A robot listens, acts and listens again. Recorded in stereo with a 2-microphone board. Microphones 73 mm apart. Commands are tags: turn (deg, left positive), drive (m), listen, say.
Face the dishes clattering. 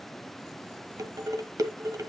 <turn deg="-50"/>
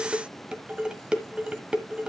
<turn deg="-15"/>
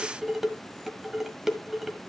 <say>Found it: dishes clattering, straight ahead.</say>